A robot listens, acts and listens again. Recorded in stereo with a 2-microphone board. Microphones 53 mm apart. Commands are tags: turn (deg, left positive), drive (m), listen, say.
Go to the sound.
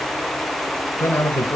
<turn deg="60"/>
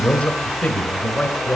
<turn deg="30"/>
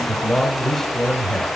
<turn deg="10"/>
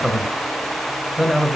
<drive m="1.0"/>
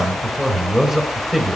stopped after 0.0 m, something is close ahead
<say>Something is in my way. I am facing the man speaking but have not reached it.</say>